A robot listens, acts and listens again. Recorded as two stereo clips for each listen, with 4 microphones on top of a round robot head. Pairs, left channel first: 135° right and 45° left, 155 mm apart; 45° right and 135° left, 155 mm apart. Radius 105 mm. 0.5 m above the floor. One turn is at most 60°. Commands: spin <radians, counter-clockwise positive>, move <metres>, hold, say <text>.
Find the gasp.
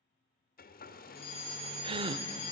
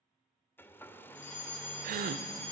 spin 1.05
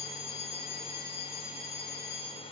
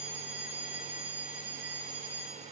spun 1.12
spin 0.70
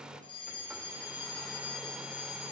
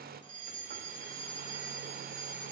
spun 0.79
say Facing where the gasp came from. I can't hear it now.